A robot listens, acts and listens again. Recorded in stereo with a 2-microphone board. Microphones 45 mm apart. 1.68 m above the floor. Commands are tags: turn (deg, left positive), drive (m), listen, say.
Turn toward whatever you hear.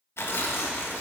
<turn deg="65"/>
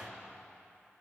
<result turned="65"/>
<listen/>
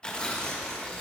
<turn deg="20"/>
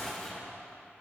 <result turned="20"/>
<say>Facing the tearing paper, 1 to 2 m away.</say>